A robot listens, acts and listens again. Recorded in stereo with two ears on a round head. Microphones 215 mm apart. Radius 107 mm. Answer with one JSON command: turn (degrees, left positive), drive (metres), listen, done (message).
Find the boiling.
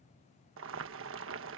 {"turn": -55}
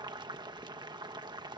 {"turn": -20}
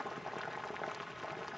{"done": "Found it: boiling, straight ahead."}